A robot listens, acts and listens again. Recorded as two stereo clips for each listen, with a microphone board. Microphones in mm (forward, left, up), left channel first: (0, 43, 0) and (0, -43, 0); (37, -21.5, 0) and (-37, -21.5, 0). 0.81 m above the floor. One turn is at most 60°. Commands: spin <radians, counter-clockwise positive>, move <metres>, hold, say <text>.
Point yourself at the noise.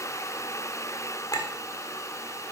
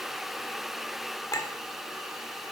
spin 0.79
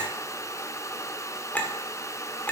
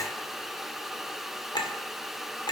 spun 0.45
spin 0.35
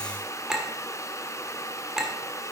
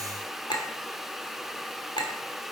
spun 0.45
say Facing the clink.